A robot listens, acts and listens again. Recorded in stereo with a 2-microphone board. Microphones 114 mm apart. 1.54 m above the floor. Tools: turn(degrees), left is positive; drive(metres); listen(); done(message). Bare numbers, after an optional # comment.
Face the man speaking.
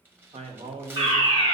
turn(-90)
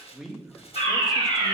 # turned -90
done("Found it: a man speaking, straight ahead, 1 to 2 m away.")